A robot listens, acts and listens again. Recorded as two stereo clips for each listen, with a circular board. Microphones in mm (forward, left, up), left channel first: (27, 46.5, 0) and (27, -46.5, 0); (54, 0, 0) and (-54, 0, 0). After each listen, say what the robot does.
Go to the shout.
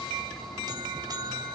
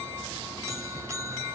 Keep listening.
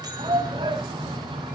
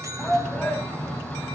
Turn 80° right.
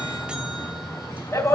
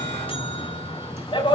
Turn 30° left.
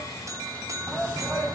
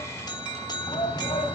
Drive 1.0 m forward.
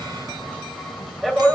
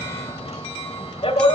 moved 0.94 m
Drive 1.0 m forward.
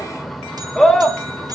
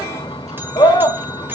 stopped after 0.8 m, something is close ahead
Arrived at the shout, straight ahead.